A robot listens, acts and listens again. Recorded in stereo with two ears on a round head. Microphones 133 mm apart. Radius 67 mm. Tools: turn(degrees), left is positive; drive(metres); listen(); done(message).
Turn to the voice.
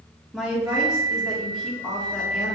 turn(degrees=-30)
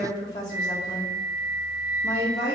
turn(degrees=25)
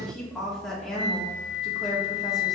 done("Facing the woman speaking.")